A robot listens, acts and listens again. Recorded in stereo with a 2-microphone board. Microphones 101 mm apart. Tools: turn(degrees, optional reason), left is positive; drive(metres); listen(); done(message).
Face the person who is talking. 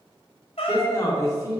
turn(degrees=30, reason="The man speaking: about 30° left or 150° left.")
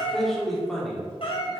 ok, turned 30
done("Facing the man speaking, 2 to 4 m away.")